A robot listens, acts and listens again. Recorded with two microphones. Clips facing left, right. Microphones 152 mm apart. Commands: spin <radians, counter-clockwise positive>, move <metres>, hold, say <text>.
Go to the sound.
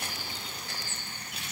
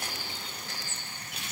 hold
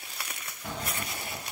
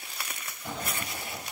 spin 1.22
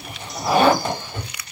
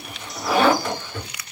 spin 0.52
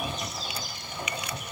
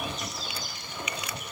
spin 0.17
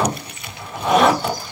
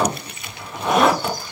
move 1.0
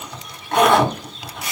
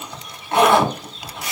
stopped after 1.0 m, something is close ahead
say I am next to the zipper.